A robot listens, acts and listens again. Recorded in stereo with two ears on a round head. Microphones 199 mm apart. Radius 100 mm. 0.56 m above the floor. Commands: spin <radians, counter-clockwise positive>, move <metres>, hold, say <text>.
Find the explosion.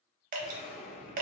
spin 0.52
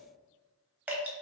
hold
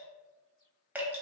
say I heard an explosion, but can't make it out now. It was about straight ahead or 120° left.